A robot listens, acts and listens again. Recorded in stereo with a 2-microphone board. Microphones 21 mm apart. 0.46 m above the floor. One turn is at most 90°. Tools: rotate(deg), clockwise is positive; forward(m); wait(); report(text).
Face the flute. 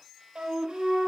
rotate(60)
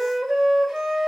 rotate(20)
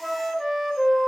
report("Found it: a flute, straight ahead, 2 to 4 m away.")